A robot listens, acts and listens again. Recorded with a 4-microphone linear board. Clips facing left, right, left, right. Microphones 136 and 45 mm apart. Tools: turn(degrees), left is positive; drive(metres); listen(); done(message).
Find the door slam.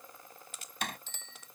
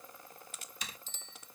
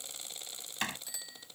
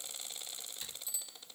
turn(degrees=65)
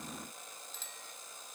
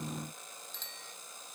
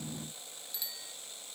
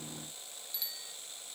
listen()
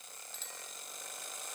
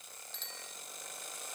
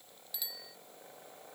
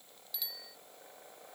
done("I heard a door slam, but can't make it out now. It was about straight ahead or 50° left.")